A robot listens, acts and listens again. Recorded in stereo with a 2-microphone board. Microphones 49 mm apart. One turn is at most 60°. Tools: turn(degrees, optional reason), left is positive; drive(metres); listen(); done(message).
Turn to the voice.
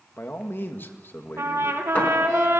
turn(degrees=50, reason="The man speaking: about 50° left or 130° left.")
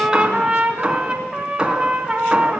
listen()
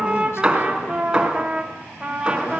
listen()
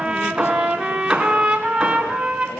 done("I heard a man speaking, but can't make it out now. It was about straight ahead or 80° left.")